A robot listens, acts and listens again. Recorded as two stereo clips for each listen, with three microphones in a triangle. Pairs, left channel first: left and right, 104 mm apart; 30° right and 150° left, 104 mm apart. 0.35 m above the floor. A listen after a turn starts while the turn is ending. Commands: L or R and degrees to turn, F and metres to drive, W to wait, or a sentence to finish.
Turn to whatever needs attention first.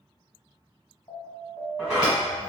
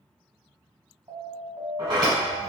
L115
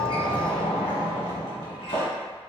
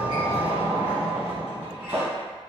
W
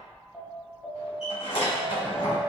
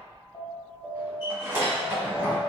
Found it: an alarm, straight ahead, 1 to 2 m away.